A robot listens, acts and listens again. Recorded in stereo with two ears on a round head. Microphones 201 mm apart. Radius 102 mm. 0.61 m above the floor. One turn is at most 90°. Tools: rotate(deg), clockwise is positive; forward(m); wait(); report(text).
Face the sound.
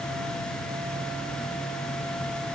wait()
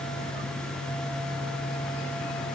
wait()
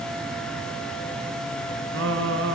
rotate(55)
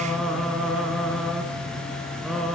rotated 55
report("Found it: singing, straight ahead, over 4 m away.")